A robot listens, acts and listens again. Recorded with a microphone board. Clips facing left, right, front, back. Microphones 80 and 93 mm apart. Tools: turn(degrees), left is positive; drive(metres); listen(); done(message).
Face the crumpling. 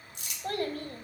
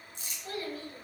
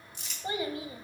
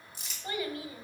turn(degrees=95)
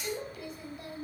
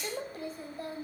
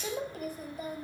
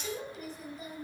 listen()
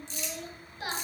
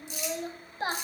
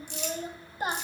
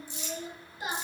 turn(degrees=-10)
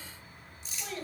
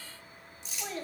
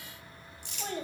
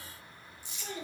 done("Found it: crumpling, straight ahead, 2 to 4 m away.")